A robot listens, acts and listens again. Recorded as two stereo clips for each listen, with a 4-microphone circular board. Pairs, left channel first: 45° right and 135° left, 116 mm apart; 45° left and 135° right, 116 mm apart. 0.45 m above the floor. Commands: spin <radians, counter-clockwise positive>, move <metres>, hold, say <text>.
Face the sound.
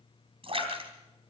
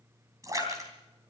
spin 2.88
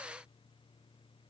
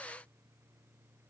say I heard a splash from this way, but can't make it out now.